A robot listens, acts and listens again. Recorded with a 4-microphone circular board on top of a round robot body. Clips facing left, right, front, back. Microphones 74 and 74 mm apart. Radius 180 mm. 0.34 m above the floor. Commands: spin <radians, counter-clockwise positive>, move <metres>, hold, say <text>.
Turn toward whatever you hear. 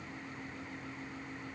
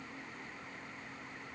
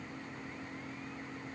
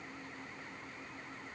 hold
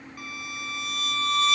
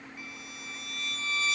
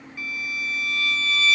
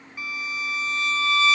spin 2.01
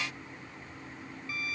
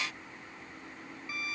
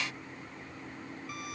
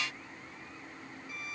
spin -0.35
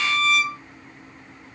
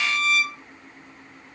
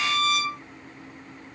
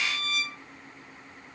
say Facing the violin.